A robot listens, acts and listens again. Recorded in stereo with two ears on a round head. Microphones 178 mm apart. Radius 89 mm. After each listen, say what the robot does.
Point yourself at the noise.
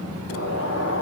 Turn 90° left.
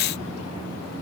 Facing where the explosion came from. I can't hear it now.